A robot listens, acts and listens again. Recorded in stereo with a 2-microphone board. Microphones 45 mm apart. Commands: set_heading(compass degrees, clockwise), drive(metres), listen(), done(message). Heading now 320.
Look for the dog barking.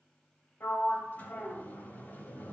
listen()
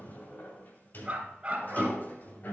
set_heading(345)
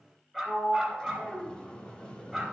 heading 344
done("Facing the dog barking.")